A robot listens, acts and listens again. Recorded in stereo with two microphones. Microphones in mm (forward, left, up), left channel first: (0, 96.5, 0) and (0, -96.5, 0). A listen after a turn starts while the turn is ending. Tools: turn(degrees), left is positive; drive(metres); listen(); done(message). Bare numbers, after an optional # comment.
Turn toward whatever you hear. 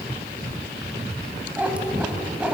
turn(-30)
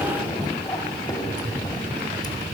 # So it is at 20° left.
turn(20)
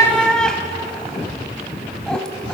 done("Facing the cat meowing, 2 to 4 m away.")